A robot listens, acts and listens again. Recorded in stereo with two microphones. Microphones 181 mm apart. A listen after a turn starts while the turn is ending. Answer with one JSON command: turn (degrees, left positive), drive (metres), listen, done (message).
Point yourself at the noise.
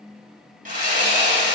{"turn": -45}
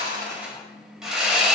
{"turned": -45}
{"done": "Facing the sawing."}